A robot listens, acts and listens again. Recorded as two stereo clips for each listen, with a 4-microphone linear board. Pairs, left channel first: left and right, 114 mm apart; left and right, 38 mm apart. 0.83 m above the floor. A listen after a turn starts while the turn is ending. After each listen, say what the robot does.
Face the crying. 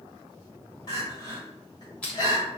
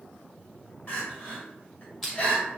Turn 40° left.
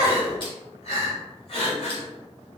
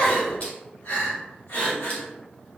Turn 95° left.
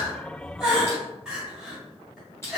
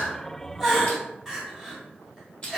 Found it: crying, straight ahead, 1 to 2 m away.